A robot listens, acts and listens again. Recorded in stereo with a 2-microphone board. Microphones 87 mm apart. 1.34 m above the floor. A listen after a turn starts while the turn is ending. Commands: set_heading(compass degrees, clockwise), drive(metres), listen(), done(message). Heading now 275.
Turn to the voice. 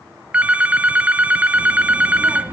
set_heading(290)
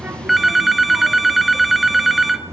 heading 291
set_heading(81)
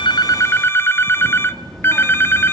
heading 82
done("Facing the child speaking.")